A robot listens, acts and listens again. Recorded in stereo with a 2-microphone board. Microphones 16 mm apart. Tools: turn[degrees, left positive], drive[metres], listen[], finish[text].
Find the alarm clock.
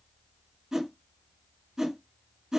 Action: listen[]
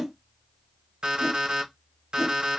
Action: turn[-90]
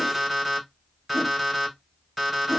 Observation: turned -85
Thought: So it is at 10° right.
Action: turn[-10]
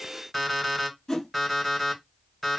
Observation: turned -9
Action: finish[Facing the alarm clock.]